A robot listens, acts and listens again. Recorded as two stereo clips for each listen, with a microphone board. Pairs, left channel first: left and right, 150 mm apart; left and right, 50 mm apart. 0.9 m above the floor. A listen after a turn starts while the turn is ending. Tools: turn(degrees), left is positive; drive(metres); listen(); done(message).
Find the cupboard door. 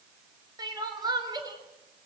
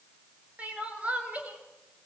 listen()
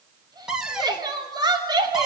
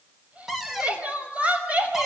turn(degrees=-30)
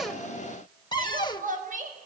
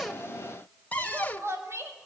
turn(degrees=30)
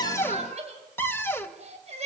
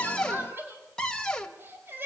turn(degrees=15)
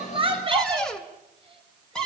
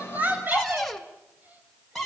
done("Facing the cupboard door.")